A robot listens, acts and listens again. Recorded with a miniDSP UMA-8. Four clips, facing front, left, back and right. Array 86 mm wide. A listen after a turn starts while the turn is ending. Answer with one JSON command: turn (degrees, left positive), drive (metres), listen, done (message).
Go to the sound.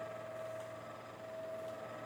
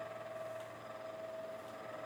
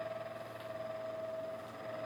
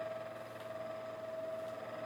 {"listen": true}
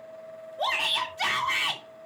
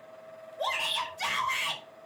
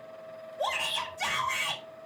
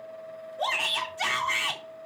{"turn": -40}
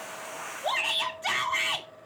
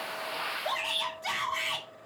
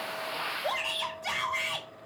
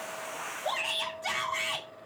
{"drive": 1.0}
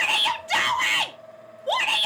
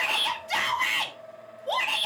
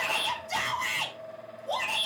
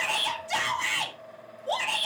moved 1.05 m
{"turn": 10}
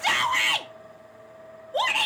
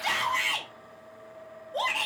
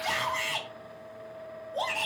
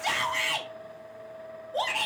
{"drive": 1.0}
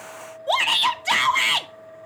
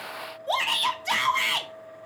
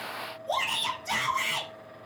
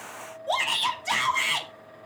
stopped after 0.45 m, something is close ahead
{"done": "I am next to the shout."}